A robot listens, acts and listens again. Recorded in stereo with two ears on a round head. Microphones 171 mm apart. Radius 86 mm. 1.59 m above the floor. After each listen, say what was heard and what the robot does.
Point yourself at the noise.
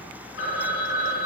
The phone ringing: about 70° left or 110° left. Turn 70° left.
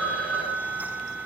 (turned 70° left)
Found it: a phone ringing, straight ahead, over 4 m away.